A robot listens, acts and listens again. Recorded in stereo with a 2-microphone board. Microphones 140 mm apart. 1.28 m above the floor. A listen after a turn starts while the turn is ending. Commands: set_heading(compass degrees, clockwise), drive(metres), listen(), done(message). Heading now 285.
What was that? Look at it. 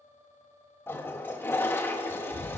set_heading(270)
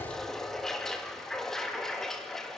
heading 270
done("Found it: a toilet flushing, straight ahead.")